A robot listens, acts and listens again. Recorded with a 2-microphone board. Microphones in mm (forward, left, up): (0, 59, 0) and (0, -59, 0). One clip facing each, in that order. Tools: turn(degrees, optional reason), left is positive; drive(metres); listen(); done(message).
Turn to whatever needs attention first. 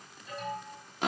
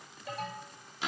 turn(degrees=-90)
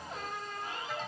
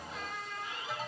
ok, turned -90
done("Facing the alarm, 2 to 4 m away.")